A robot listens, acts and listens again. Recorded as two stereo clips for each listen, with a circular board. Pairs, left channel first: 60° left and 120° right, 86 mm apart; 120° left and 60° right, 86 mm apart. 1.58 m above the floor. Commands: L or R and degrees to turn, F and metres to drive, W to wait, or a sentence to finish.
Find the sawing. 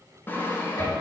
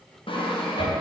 L125
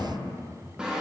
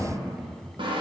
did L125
R40
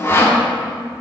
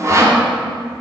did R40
Facing the sawing, 1 to 2 m away.